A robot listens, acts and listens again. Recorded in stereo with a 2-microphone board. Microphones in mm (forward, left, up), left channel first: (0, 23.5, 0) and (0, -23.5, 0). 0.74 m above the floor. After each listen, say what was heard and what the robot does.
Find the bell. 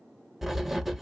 Keep listening.
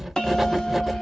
Turn 30° left.
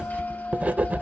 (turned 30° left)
Keep listening.
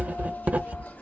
Keep listening.
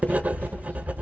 I heard a bell, but can't make it out now. It was about 15° right or 135° left.